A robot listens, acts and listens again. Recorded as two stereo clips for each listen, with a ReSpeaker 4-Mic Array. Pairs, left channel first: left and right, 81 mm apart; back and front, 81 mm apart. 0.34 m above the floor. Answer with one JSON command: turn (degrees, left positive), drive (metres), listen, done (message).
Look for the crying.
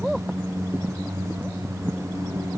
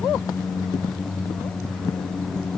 {"listen": true}
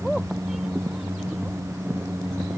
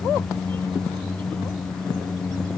{"listen": true}
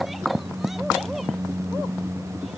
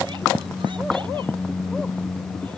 {"done": "I can't make out crying to turn to."}